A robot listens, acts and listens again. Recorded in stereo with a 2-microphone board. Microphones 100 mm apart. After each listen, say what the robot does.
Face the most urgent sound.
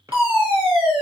Turn 60° right.
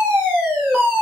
Turn 15° right.
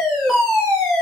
Found it: a fire alarm, straight ahead.